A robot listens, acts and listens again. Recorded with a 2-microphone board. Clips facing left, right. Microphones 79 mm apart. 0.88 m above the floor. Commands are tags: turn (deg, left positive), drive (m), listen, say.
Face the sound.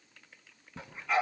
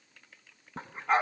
<turn deg="-40"/>
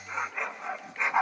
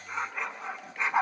<say>Facing the dog barking, 2 to 4 m away.</say>